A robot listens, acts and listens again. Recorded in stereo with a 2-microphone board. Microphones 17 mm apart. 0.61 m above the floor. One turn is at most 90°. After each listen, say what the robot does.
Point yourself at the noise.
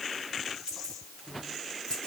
Turn 90° left.
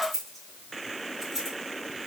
Facing the keys jangling, over 4 m away.